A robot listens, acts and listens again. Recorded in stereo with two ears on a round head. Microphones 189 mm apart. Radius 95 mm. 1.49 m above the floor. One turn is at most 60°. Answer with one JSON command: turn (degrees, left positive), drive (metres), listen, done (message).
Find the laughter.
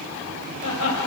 {"turn": 60}
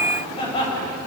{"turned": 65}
{"turn": 25}
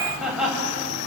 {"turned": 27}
{"done": "Facing the laughter, over 4 m away."}